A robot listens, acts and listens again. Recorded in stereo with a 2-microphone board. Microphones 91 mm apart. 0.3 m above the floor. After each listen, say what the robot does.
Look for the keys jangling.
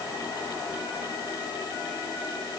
Keep listening.
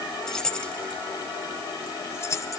Turn 35° left.
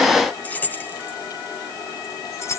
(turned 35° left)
Turn 30° left.
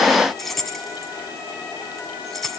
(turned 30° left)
Found it: keys jangling, straight ahead.